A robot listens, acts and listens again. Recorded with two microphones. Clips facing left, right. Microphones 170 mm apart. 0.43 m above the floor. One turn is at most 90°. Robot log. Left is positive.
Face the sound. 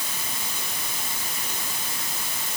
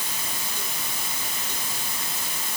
cmd idle
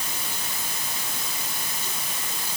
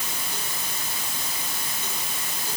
cmd idle
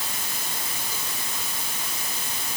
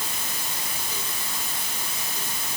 end: I can't make out anything to turn to.